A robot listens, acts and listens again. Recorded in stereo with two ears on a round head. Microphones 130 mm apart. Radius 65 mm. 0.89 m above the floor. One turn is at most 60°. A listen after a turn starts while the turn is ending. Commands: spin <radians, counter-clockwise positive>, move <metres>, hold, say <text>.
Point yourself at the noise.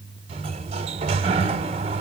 spin -0.79
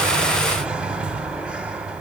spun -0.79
spin -0.17
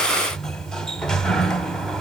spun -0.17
say Found it: a sliding door, straight ahead.